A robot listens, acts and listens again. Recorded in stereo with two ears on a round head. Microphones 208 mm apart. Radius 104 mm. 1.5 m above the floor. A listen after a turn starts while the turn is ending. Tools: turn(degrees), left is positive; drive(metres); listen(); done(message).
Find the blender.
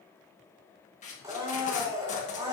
turn(degrees=-30)
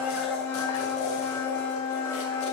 turn(degrees=15)
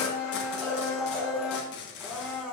done("Found it: a blender, straight ahead.")